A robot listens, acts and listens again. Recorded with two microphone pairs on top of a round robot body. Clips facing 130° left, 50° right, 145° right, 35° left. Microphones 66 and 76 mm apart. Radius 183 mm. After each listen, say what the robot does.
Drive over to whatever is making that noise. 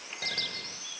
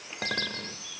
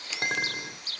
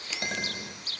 Turn 95° right.
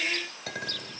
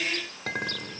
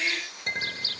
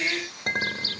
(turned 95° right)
Drive 1.0 m forward.
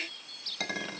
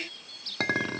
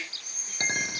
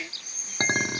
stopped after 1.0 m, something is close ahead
Turn 10° right.
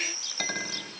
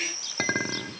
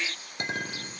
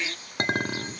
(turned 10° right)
I am next to the clink.